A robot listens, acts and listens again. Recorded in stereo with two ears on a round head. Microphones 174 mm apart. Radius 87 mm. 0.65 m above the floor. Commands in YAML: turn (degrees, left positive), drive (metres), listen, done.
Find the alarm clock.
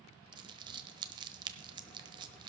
listen: true
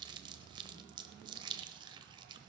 listen: true
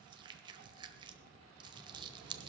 done: "I can't make out an alarm clock to turn to."